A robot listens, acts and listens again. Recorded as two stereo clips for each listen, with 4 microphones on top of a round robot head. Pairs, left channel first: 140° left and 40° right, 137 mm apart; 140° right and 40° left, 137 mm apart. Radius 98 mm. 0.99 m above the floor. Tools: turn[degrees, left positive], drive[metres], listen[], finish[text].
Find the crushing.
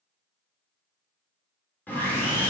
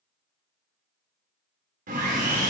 Action: listen[]
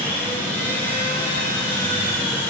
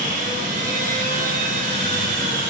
Action: listen[]
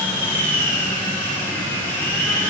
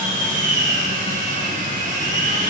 Action: finish[I can't make out crushing, only sawing.]